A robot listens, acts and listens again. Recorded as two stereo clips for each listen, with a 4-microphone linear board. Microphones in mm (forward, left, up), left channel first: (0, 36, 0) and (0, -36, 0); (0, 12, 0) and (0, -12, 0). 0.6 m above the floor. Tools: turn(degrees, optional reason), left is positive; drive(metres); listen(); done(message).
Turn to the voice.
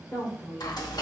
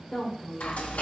turn(degrees=35, reason="The woman speaking: about 35° left or 145° left.")
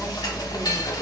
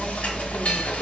listen()
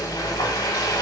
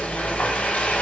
listen()
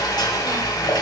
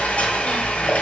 done("I heard a woman speaking, but can't make it out now. It was about straight ahead or 110° left.")